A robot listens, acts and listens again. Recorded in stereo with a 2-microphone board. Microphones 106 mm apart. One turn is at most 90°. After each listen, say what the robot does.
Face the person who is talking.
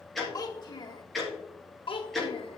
Turn 55° left.
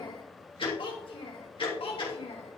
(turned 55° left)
Turn 65° left.
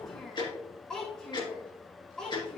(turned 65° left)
Found it: a child speaking, straight ahead.